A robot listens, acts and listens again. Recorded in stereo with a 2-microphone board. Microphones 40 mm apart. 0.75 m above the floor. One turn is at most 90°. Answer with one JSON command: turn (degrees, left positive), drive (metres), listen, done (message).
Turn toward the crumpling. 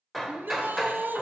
{"listen": true}
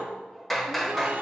{"listen": true}
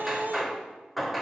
{"done": "I can't make out crumpling, only a shout and hammering."}